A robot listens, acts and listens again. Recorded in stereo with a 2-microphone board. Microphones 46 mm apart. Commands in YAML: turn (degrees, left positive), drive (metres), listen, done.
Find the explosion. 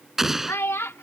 turn: -30
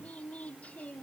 listen: true
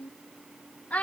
done: "I heard an explosion, but can't make it out now. It was about 20° left or 140° right."